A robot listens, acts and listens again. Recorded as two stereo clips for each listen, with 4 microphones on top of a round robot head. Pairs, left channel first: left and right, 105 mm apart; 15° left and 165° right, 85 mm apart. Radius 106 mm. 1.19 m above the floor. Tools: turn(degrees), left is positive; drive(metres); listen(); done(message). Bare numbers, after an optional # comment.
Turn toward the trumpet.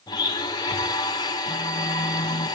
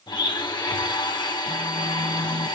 listen()
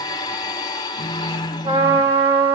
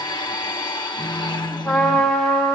# The trumpet: 60° right.
turn(-60)
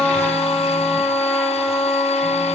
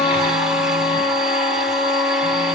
# The trumpet is now 10° left.
turn(10)
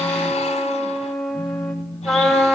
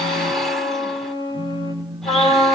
done("Facing the trumpet.")